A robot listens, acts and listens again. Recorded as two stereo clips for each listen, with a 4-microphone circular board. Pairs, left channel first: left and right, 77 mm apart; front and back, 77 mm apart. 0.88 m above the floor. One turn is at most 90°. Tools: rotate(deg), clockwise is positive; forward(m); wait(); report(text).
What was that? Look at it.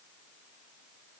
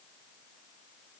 wait()
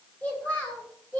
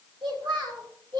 rotate(-90)
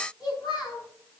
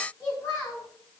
rotate(-60)
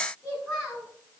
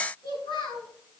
report("Found it: a child speaking, straight ahead.")